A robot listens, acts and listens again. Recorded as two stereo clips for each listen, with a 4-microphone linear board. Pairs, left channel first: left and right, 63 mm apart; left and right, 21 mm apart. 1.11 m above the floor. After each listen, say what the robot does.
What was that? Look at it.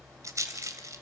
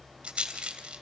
Turn 55° right.
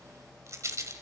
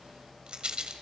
Turn 60° right.
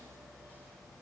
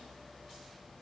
Keep listening.
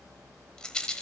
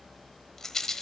Turn 15° left.
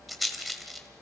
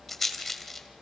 Facing the rattle, 1 to 2 m away.